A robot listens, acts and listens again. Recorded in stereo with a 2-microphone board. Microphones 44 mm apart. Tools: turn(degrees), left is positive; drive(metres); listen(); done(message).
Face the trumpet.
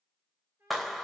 turn(degrees=-65)
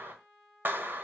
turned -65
done("Facing the trumpet.")